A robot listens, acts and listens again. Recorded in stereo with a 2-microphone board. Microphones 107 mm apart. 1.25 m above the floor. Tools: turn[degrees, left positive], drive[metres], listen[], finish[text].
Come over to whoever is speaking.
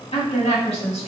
Thought: The woman speaking: about 70° left or 110° left.
Action: turn[70]
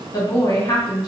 Thought: So it is at 35° left.
Action: turn[35]
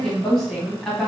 Action: drive[1.0]
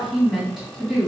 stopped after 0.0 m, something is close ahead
Action: finish[Something is in my way. I am facing the woman speaking but have not reached it.]